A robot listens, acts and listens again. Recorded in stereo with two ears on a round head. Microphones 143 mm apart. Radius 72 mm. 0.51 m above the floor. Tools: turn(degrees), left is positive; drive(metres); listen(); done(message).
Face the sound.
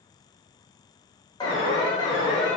turn(degrees=30)
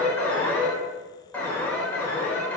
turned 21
turn(degrees=15)
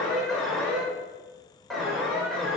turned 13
done("Facing the alarm.")